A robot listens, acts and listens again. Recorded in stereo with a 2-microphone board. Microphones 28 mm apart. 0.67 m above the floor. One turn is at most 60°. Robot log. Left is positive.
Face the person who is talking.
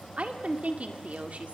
note: The woman speaking: about 55° right or 125° right.
cmd yaw -55
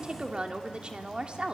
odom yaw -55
note: So it is at 45° right.
cmd yaw -45
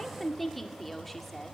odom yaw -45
end: Found it: a woman speaking, straight ahead.